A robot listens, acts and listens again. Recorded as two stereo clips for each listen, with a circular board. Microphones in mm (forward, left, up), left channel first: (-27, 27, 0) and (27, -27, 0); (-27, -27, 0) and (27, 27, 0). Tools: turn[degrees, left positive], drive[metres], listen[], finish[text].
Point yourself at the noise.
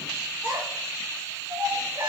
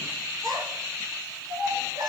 Action: finish[Facing the child speaking.]